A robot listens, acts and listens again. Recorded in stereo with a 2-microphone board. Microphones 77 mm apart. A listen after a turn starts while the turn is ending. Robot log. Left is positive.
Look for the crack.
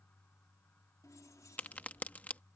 note: The crack: about 20° left or 160° left.
cmd yaw +20
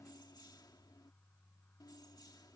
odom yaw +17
cmd idle
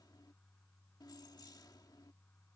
end: I heard a crack, but can't make it out now. It was about 5° left or 145° left.